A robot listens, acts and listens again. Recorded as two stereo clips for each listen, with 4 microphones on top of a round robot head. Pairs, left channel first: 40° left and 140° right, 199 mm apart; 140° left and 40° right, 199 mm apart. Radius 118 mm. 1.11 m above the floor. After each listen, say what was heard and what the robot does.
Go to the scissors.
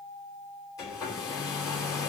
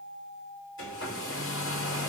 Keep listening.
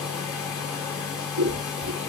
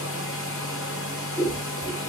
The scissors: 140° right. Turn 140° right.
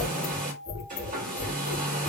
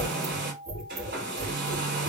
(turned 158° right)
The scissors is now 20° left. Turn 20° left.
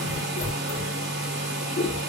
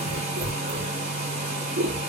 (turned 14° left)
Drive 1.0 m forward.
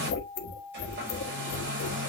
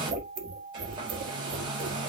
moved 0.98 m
The scissors is now 15° left. Turn 15° left.
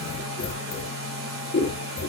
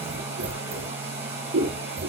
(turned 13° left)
Drive 1.0 m forward.
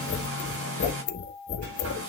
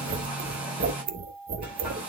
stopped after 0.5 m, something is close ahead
I am next to the scissors.